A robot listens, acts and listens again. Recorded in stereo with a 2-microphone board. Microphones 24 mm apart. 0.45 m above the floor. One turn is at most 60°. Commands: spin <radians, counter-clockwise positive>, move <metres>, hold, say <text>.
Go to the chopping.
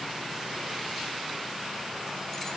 hold
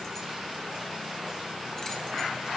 hold
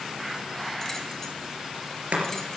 spin -1.05
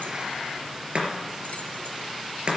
spin -0.96
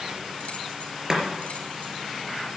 spin -0.52
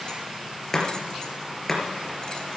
spin 0.17
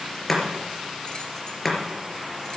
move 1.0
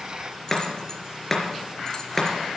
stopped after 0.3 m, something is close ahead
spin 0.17
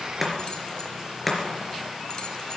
say Something is in my way. I am facing the chopping but have not reached it.